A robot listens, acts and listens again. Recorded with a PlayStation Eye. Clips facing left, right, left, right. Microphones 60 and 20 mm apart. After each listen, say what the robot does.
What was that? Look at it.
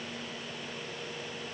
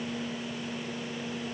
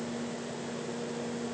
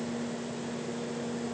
Keep listening.
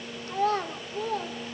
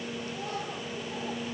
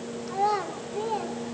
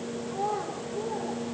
Turn 70° left.
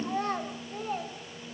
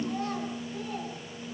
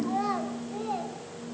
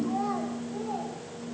Turn 40° left.
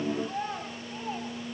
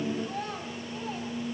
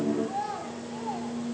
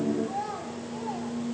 Turn 15° left.
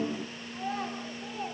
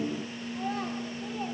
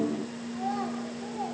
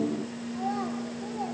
Facing the child speaking.